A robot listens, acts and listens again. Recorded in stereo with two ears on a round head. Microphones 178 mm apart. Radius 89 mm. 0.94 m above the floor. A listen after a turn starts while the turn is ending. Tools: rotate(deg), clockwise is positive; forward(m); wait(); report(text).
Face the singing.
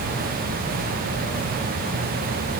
wait()
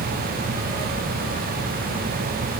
wait()
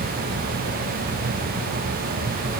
report("I can't make out singing to turn to.")